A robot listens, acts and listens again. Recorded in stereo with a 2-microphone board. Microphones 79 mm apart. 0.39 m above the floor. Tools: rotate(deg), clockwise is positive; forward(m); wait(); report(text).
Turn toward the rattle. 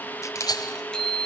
rotate(-55)
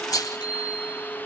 rotate(-60)
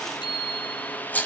rotate(-25)
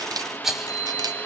report("Found it: a rattle, straight ahead.")